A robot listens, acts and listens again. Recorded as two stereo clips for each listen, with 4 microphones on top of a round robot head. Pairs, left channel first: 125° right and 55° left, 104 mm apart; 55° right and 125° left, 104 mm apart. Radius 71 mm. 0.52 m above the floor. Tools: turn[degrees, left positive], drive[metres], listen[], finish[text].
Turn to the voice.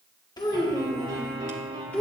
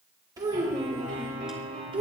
Thought: The child speaking: 155° left.
Action: turn[155]
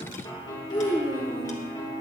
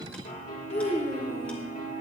Thought: The child speaking is now 90° right.
Action: turn[-90]
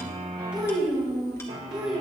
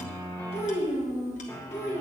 Thought: The child speaking is now 25° right.
Action: turn[-25]
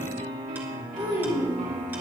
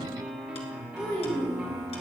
Thought: The child speaking is now 10° left.
Action: turn[10]
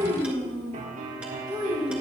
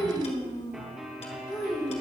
Action: finish[Found it: a child speaking, straight ahead.]